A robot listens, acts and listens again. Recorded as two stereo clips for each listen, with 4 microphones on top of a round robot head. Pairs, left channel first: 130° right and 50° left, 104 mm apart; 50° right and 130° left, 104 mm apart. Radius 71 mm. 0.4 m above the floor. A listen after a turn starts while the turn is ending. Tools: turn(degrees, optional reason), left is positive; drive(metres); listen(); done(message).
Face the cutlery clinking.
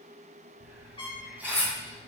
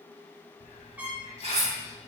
turn(degrees=155, reason="The cutlery clinking: 155° left.")
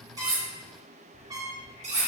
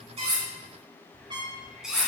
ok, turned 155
turn(degrees=45, reason="The cutlery clinking is now 45° left.")
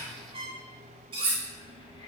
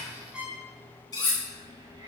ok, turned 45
done("Found it: cutlery clinking, straight ahead, 2 to 4 m away.")